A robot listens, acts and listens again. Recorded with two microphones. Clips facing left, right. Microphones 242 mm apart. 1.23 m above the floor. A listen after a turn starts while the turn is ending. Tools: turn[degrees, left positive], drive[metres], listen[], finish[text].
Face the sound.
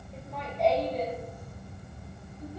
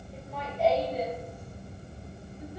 Action: turn[-30]
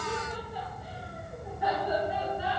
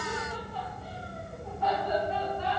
Thought: So it is at 10° left.
Action: turn[10]
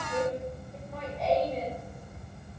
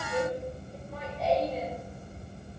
Action: finish[Found it: laughter, straight ahead.]